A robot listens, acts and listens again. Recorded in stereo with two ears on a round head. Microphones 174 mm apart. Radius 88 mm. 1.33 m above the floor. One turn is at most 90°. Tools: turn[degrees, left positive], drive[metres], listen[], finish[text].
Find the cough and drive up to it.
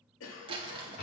Action: turn[90]
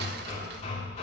Action: listen[]
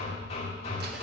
Action: listen[]
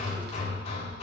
Action: finish[I heard a cough from this way, but can't make it out now. I did not reach it.]